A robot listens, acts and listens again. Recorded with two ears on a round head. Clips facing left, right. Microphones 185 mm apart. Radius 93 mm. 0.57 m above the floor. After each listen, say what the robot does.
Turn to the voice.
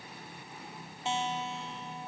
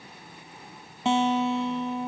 Keep listening.
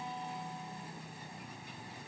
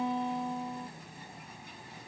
Keep listening.
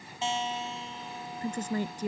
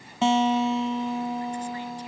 Turn 40° left.
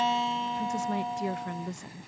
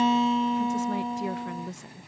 Facing the woman speaking.